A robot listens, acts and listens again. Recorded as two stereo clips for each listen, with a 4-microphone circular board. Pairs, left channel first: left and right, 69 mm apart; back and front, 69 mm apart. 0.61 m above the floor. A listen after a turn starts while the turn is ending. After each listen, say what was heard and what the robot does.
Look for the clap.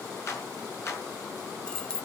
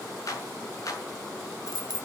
The clap: 140° left. Turn 140° left.
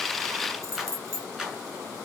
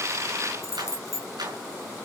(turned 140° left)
Facing the clap.